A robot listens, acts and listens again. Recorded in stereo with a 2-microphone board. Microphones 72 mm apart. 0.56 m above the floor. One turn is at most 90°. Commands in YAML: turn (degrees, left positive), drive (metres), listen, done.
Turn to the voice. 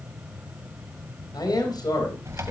turn: 70
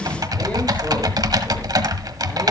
listen: true
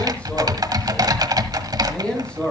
turn: 15
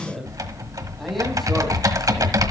done: "Found it: a man speaking, straight ahead."